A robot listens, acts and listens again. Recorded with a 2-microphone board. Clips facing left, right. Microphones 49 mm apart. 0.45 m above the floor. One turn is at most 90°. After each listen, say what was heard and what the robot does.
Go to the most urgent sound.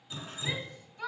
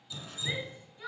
The shout: about 70° left or 110° left. Turn 70° left.
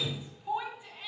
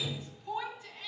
So it is at 20° left. Turn 20° left.
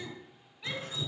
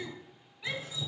Drive 1.0 m forward.
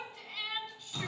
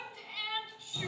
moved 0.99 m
Drive 1.0 m forward.
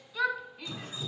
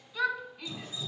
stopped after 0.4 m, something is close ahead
I am next to the shout.